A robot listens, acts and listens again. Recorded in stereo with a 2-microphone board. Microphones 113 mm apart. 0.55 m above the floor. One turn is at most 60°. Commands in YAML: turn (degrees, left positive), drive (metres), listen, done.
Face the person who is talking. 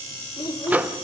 turn: 40
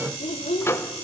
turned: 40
turn: 60
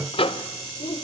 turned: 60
turn: 55
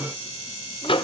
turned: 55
listen: true
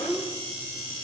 done: "Facing the child speaking."